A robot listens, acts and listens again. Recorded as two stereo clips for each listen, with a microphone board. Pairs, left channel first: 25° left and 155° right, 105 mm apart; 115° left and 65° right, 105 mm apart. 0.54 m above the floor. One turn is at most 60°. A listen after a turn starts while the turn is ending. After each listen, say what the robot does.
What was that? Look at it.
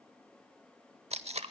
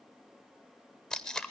Turn 60° right.
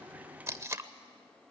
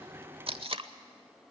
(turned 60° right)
Turn 60° right.
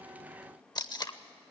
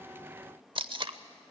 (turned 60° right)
Turn 30° right.
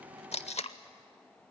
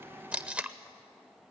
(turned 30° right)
Turn 10° left.
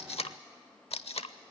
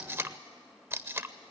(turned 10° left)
Found it: tape being pulled, straight ahead.